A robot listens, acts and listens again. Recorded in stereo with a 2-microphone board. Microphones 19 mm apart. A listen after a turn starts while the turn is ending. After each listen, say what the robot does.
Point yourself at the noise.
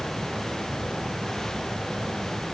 Keep listening.
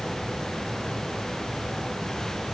Keep listening.
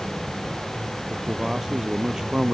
Turn 35° right.
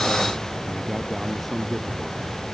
Keep listening.
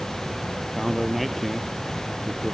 Found it: a man speaking, straight ahead.